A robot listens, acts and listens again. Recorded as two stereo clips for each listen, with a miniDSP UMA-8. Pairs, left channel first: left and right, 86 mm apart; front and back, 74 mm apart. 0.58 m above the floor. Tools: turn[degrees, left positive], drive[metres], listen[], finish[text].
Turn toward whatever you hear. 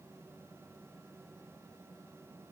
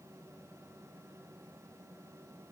Action: listen[]
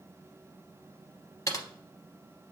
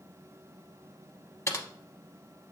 Thought: The typing on a keyboard: 45° left.
Action: turn[45]
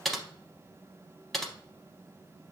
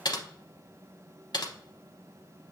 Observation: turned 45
Action: finish[Found it: typing on a keyboard, straight ahead.]